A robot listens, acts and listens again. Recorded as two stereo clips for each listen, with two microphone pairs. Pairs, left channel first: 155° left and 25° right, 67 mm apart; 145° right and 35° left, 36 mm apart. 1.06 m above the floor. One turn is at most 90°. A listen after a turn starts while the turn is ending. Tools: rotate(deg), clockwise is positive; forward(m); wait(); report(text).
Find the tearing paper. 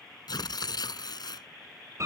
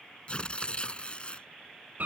rotate(-90)
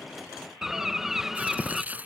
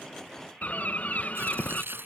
rotate(-40)
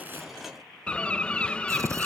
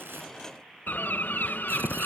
wait()
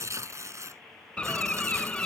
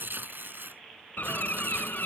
rotate(-15)
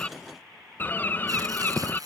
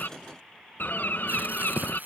report("Facing the tearing paper.")